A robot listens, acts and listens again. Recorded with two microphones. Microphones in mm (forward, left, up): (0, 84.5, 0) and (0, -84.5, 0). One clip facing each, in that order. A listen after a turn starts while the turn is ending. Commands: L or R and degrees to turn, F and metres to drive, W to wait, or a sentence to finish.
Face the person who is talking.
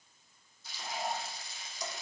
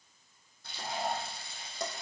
W
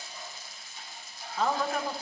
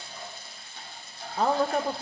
R40
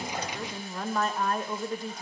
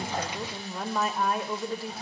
Facing the woman speaking, 1 to 2 m away.